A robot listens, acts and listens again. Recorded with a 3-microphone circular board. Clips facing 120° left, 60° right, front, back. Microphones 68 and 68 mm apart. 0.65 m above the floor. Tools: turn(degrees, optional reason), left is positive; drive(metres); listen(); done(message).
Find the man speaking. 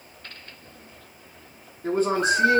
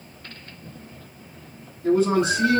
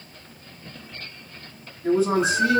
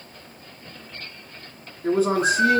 turn(degrees=160, reason="The man speaking: 160° left.")
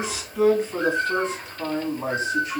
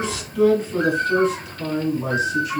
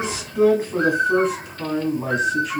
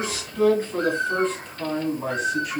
turn(degrees=95, reason="The man speaking is now 95° left.")
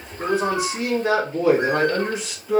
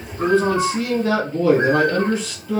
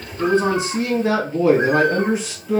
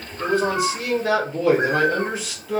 turn(degrees=65, reason="The man speaking is now 65° left.")
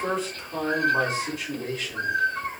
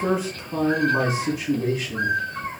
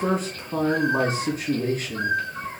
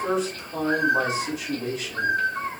turn(degrees=15, reason="The man speaking is now 15° left.")
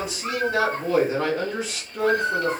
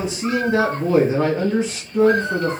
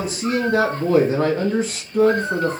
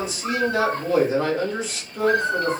done("Found it: a man speaking, straight ahead, 1 to 2 m away.")